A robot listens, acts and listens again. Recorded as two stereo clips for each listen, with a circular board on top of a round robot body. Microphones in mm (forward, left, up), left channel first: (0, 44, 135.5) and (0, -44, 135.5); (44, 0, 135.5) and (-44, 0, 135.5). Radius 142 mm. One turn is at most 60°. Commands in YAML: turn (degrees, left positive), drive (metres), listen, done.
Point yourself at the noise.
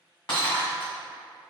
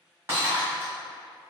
turn: 60
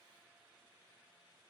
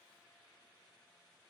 turn: 60
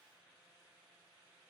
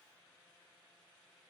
done: "I heard breaking glass from this way, but can't make it out now."